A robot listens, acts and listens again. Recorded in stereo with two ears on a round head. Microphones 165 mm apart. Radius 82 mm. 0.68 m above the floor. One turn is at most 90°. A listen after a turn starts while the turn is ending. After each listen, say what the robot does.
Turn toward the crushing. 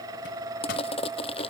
Turn 30° left.
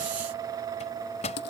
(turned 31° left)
Turn 90° left.
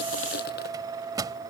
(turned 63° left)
Turn 55° left.
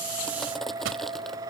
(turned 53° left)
Keep listening.
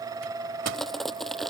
Found it: crushing, straight ahead.